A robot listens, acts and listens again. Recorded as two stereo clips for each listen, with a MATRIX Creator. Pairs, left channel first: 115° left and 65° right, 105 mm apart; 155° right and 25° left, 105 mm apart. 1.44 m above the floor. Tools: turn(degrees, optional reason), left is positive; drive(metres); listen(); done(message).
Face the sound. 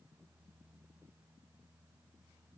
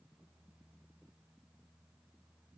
listen()
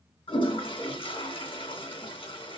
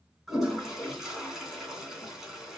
turn(degrees=110, reason="The toilet flushing: 110° left.")
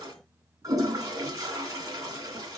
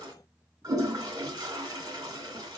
turn(degrees=-20, reason="The toilet flushing is now 20° right.")
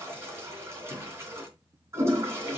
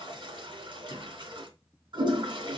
done("Facing the toilet flushing, 2 to 4 m away.")